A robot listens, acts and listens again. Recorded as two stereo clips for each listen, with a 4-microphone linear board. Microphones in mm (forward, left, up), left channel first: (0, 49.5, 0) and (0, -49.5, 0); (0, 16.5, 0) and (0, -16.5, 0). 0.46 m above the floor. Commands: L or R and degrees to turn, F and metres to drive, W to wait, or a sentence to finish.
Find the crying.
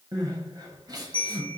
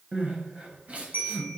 R40
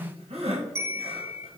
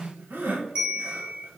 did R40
R100
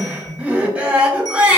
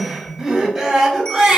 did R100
R15
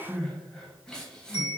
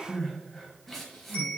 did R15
Facing the crying.